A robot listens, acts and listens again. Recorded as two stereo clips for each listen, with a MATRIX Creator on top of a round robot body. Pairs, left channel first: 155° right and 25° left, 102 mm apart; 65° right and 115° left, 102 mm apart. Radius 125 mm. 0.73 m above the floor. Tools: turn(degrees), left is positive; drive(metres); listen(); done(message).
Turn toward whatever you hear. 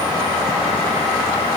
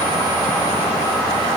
listen()
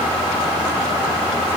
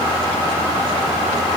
listen()
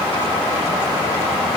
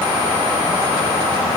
done("I can't make out anything to turn to.")